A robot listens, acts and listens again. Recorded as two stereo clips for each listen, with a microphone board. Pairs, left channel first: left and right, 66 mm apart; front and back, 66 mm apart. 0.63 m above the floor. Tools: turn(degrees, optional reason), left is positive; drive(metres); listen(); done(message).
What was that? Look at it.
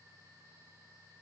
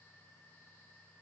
listen()
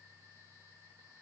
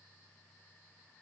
listen()
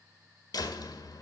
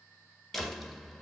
turn(degrees=85, reason="The door slam: 85° left.")
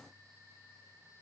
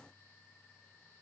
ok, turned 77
turn(degrees=10, reason="Nothing new. It was at 10° left.")
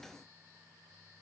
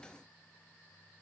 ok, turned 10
done("I heard a door slam from this way, but can't make it out now.")